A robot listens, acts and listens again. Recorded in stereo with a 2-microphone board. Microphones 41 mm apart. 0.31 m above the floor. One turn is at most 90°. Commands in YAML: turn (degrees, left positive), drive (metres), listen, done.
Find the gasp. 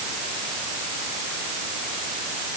listen: true
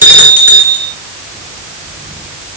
listen: true
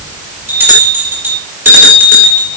done: "I can't make out a gasp, only a bell."